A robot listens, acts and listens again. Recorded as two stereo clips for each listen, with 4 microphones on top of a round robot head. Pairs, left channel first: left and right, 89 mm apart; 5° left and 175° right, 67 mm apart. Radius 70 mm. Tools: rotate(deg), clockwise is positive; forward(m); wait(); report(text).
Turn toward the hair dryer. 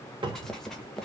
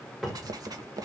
wait()
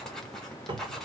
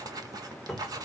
wait()
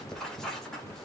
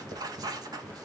report("I can't make out a hair dryer, only a cupboard door and writing.")